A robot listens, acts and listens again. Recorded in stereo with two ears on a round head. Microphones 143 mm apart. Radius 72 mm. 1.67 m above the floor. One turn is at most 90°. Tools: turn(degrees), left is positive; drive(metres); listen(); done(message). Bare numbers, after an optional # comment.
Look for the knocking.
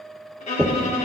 turn(-30)
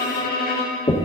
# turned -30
# So it is at 20° left.
turn(20)
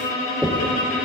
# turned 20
done("Facing the knocking.")